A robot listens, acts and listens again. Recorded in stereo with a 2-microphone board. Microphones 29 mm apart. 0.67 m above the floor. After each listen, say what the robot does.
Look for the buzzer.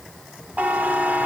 Turn 70° right.
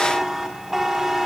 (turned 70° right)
Turn 15° right.
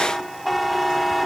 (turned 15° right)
Found it: a buzzer, straight ahead, 1 to 2 m away.